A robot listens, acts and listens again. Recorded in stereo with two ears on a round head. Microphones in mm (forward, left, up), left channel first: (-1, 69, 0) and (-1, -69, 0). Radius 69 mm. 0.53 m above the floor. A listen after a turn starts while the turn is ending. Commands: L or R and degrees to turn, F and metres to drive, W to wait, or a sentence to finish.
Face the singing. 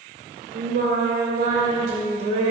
R45
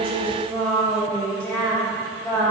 L20
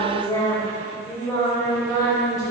L20
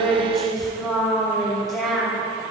Facing the singing.